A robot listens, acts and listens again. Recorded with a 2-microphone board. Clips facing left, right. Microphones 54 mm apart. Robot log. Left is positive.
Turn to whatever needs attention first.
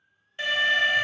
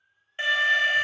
note: The alarm: about 25° right or 155° right.
cmd yaw -25
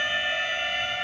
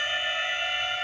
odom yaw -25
end: Facing the alarm, under 1 m away.